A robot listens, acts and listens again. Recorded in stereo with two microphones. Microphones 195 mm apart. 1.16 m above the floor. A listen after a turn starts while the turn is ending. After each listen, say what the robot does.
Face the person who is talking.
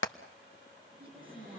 Turn 25° right.
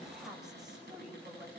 Found it: a woman speaking, straight ahead, over 4 m away.